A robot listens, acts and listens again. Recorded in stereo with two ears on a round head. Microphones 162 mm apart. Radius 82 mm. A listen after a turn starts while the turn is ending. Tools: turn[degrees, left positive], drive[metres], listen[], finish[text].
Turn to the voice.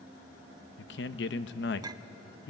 Thought: The man speaking: about 65° left or 115° left.
Action: turn[65]
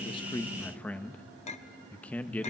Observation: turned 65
Thought: So it is at 10° left.
Action: turn[10]
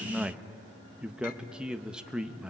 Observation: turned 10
Action: finish[Facing the man speaking.]